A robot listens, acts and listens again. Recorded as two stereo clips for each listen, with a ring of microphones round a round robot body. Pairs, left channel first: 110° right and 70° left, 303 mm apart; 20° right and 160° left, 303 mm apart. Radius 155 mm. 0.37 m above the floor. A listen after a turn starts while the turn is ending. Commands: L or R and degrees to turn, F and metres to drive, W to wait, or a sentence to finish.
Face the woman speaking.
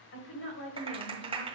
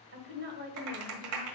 R150
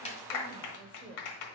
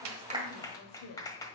Found it: a woman speaking, straight ahead.